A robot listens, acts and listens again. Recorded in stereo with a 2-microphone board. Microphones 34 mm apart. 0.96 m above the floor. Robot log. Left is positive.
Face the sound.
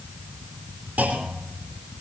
note: The clunk: about 75° right or 105° right.
cmd yaw -75
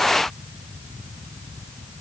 cmd idle
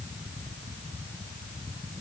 end: I heard a clunk, but can't make it out now. It was about straight ahead or 30° right.